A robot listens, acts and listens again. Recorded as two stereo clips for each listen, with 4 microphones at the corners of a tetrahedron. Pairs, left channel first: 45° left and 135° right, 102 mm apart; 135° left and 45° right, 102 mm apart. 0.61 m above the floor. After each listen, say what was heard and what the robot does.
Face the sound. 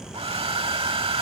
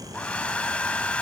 The hair dryer: 150° right. Turn 150° right.
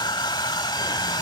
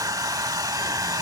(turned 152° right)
Found it: a hair dryer, straight ahead.